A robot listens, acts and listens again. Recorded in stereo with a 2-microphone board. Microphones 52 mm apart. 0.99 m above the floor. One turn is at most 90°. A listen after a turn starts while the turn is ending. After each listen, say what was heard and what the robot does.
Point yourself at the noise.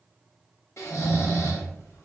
The snoring: about 65° left or 115° left. Turn 65° left.
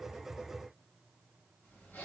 Keep listening.
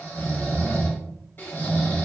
So it is at 45° left. Turn 45° left.
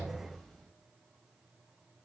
Keep listening.
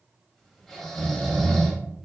The snoring is now 10° left. Turn 10° left.
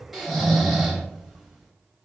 Facing the snoring.